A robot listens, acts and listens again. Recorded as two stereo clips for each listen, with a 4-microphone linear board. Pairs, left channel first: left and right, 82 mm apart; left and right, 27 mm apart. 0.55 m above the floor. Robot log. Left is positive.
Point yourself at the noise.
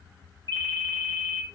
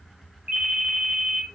note: The ringtone: about 60° right or 120° right.
cmd yaw -60
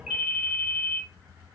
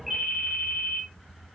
note: So it is at 10° right.
cmd yaw -10
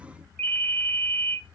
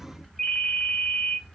end: Facing the ringtone.